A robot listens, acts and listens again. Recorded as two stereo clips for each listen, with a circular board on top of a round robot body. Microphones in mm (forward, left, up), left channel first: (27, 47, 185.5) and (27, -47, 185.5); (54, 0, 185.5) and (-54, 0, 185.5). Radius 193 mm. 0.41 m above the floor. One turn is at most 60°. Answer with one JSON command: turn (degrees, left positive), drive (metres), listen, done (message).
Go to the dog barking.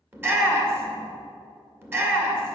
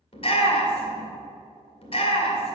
{"listen": true}
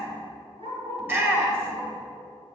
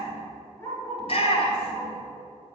{"turn": -60}
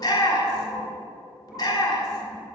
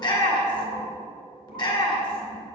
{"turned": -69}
{"listen": true}
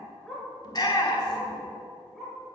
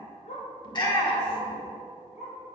{"drive": 1.0}
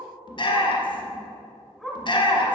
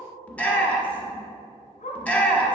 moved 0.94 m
{"drive": 1.0}
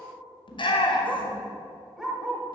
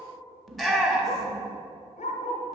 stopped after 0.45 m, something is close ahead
{"done": "I am next to the dog barking."}